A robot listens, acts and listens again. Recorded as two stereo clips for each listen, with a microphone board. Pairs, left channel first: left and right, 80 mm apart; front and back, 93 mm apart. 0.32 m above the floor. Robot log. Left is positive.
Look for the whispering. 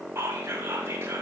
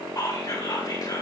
note: The whispering: 35° right.
cmd yaw -35
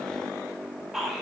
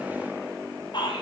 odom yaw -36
end: Found it: whispering, straight ahead, 1 to 2 m away.